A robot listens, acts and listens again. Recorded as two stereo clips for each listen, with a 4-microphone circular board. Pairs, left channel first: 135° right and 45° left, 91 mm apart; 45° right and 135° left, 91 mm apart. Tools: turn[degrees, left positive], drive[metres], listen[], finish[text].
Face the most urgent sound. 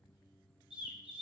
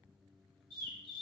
Action: listen[]
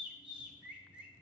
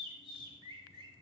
Action: listen[]
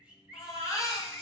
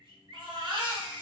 Thought: The baby crying: 170° left.
Action: turn[170]
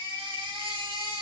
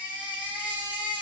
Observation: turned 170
Thought: The baby crying is now 60° left.
Action: turn[60]
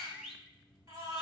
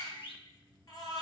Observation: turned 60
Action: finish[Facing the baby crying.]